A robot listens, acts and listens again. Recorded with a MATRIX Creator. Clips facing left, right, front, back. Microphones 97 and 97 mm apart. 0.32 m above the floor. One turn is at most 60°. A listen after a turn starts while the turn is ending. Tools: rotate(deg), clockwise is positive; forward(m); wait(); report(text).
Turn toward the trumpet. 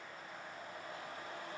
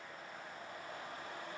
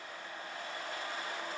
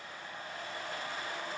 wait()
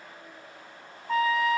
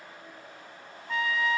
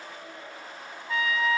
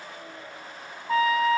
rotate(-60)
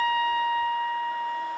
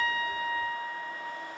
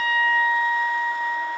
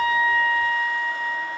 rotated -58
rotate(-60)
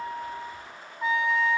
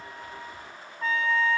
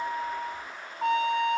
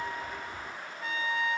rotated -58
rotate(-15)
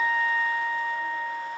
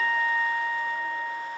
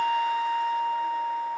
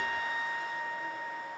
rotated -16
report("Found it: a trumpet, straight ahead, 2 to 4 m away.")